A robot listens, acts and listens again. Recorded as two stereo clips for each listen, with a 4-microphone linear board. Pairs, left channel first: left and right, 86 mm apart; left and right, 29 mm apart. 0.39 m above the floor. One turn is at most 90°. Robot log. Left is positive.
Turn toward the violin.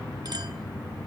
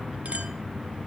cmd idle
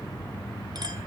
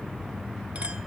cmd idle
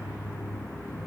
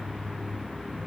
end: I can't make out a violin to turn to.